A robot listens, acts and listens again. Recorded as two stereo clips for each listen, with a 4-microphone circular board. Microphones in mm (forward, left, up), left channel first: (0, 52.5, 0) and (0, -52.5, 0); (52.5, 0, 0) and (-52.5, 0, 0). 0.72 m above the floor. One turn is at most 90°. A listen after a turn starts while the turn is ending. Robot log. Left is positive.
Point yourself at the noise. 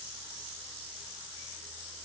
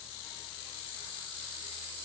cmd idle
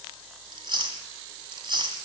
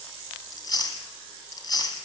note: The chewing: 45° right.
cmd yaw -45
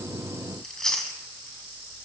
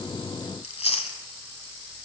end: Found it: chewing, straight ahead.